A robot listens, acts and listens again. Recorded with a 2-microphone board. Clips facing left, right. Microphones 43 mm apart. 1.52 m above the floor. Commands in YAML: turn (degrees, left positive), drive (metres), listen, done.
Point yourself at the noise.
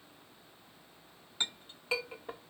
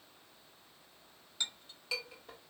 turn: 30
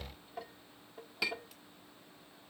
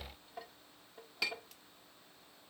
done: "Facing the clink, 1 to 2 m away."